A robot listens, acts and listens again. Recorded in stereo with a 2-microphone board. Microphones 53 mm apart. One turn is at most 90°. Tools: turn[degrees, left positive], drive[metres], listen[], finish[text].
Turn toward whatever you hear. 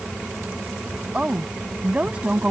Thought: The woman speaking: about 25° right or 155° right.
Action: turn[-25]
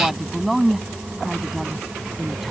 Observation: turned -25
Action: finish[Found it: a woman speaking, straight ahead.]